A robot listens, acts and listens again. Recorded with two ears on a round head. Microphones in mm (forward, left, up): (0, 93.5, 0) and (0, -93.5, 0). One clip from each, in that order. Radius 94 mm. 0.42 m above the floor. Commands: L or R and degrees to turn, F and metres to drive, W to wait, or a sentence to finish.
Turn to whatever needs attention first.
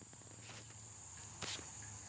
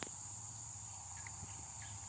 W
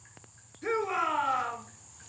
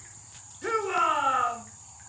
R90
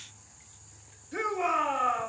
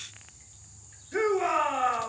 Found it: a shout, straight ahead, over 4 m away.